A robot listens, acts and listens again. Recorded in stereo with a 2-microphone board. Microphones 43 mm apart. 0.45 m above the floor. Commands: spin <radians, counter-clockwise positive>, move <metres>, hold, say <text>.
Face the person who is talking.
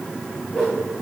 hold
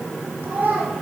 spin -0.87
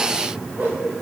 hold
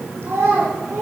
spin -1.48
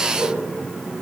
hold
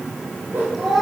say Facing the child speaking, over 4 m away.